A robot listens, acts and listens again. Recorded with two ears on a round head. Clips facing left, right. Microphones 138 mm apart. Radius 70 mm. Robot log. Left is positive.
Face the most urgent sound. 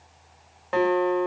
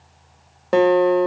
cmd idle
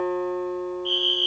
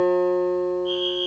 note: The fire alarm: about 30° left or 150° left.
cmd yaw +30
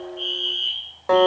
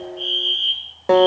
end: Facing the fire alarm.